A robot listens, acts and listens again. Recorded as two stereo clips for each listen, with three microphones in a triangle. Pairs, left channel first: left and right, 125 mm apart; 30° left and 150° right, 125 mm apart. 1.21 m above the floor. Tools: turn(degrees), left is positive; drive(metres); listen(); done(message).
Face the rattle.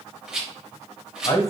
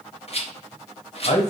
done("Facing the rattle.")